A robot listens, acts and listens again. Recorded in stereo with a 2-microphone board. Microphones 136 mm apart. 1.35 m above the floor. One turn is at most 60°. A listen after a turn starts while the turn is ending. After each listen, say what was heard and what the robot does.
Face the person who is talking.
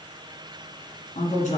The woman speaking: about 60° left or 120° left. Turn 60° left.
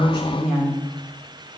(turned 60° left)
Facing the woman speaking.